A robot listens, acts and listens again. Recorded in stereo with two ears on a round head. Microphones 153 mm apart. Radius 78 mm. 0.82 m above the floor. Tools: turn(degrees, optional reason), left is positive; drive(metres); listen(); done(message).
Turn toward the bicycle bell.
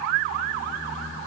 listen()
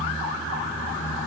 listen()
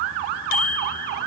turn(degrees=55, reason="The bicycle bell: about 55° left or 125° left.")
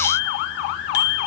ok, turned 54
turn(degrees=70, reason="So it is at 70° left.")
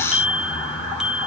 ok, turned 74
done("Facing the bicycle bell, 2 to 4 m away.")